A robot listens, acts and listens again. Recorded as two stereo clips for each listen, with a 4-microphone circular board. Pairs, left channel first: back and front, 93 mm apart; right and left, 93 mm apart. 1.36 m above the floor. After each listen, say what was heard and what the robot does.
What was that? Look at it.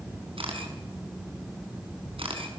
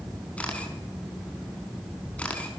The camera shutter: 15° right. Turn 15° right.
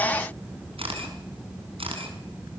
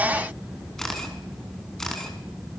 Found it: a camera shutter, straight ahead, over 4 m away.